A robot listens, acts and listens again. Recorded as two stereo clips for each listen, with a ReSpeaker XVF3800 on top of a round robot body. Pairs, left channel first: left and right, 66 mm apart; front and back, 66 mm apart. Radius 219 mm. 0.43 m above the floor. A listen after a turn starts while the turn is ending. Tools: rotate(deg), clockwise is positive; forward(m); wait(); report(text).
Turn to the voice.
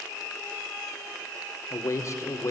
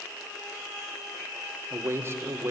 rotate(-130)
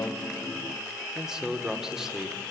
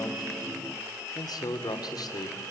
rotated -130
report("Found it: a man speaking, straight ahead, 2 to 4 m away.")